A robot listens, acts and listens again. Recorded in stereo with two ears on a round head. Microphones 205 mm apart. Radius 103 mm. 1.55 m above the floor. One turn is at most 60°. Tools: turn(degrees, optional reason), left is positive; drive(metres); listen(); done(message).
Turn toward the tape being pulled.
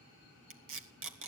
turn(degrees=-60, reason="The tape being pulled: about 60° right or 120° right.")
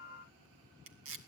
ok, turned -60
turn(degrees=-60, reason="So it is at 60° right.")
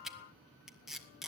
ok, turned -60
done("Found it: tape being pulled, straight ahead.")